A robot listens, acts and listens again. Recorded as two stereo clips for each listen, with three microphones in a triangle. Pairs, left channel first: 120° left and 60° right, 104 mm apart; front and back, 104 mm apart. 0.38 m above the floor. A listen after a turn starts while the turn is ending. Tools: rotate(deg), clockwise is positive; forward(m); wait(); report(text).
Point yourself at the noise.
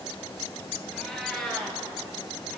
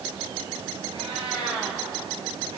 rotate(155)
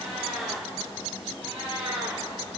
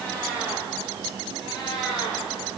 rotate(45)
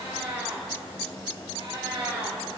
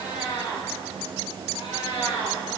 rotate(30)
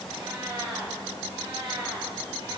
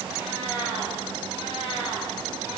rotate(20)
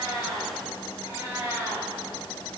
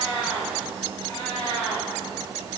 report("Found it: a cat meowing, straight ahead, over 4 m away.")